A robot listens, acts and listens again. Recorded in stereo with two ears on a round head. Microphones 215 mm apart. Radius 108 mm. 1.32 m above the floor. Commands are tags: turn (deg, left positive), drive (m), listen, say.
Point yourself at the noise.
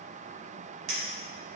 <turn deg="-60"/>
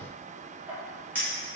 <turn deg="-10"/>
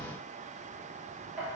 <say>Found it: a clink, straight ahead.</say>